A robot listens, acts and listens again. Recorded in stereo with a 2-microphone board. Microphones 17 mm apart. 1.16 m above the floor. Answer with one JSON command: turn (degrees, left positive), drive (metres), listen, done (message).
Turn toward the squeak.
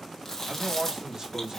{"listen": true}
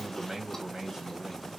{"listen": true}
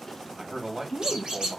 {"turn": -90}
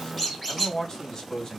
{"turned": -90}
{"done": "Found it: a squeak, straight ahead."}